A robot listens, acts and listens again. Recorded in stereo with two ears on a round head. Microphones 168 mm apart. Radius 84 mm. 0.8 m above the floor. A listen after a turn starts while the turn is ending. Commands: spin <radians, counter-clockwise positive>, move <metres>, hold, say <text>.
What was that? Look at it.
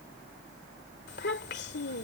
spin 1.05
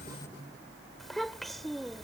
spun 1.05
say Facing the child speaking.